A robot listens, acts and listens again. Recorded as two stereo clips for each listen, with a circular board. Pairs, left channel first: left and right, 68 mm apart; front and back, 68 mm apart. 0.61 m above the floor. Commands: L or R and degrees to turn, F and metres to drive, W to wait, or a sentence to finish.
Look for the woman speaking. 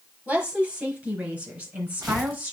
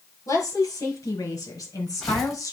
R30
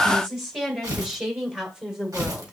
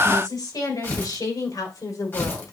R15
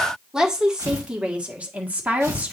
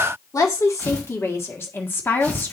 R35
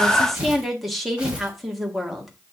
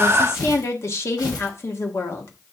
Found it: a woman speaking, straight ahead, 1 to 2 m away.